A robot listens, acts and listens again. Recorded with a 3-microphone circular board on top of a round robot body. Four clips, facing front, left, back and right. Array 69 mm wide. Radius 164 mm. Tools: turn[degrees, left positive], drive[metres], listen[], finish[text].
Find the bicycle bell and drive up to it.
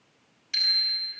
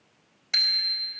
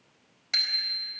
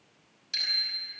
Thought: The bicycle bell: 150° left.
Action: turn[150]
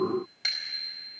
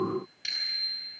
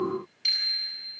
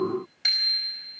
Thought: The bicycle bell is now 20° right.
Action: turn[-20]
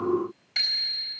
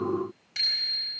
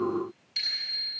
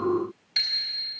Action: drive[1.0]
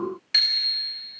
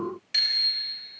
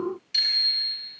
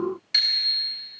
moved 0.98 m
Action: drive[1.0]
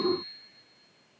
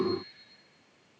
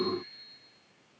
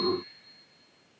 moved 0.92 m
Action: listen[]
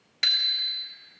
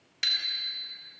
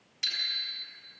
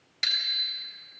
Action: drive[1.0]
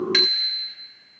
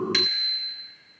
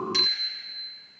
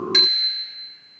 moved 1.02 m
Action: drive[1.0]
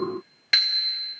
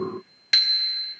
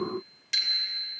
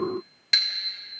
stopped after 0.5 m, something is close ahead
Thought: The bicycle bell is now 10° left.
Action: turn[10]
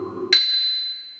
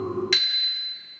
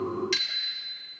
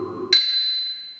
Action: finish[I am next to the bicycle bell.]